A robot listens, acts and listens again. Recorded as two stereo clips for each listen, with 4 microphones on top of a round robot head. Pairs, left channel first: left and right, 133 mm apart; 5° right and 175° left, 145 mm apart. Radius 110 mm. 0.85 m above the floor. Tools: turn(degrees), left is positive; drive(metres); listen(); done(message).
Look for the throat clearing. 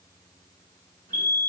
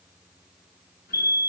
listen()
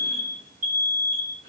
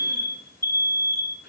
listen()
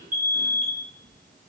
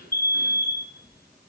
turn(degrees=-35)
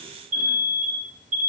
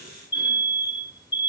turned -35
listen()
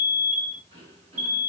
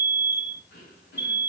turn(degrees=-25)
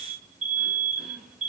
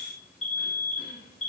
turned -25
listen()
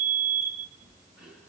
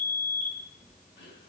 turn(degrees=-10)
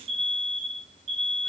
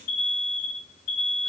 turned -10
listen()
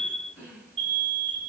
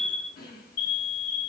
done("Facing the throat clearing, 2 to 4 m away.")